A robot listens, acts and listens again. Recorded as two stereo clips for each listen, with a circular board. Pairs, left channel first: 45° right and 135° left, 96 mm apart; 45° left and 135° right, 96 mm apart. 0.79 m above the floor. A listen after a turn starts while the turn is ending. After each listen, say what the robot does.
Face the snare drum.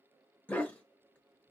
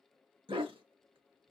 Keep listening.
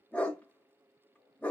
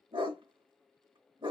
Keep listening.
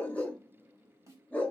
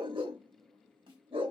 Turn 170° right.
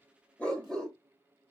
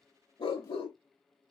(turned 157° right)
Turn 15° right.
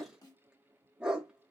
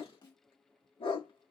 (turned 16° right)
Facing the snare drum.